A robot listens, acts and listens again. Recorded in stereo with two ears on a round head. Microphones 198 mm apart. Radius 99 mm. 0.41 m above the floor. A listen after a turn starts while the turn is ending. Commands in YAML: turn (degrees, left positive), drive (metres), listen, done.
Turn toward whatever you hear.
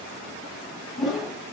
turn: 30
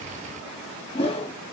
turn: 150
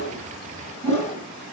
turn: 35
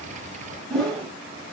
done: "Found it: a whoosh, straight ahead, 1 to 2 m away."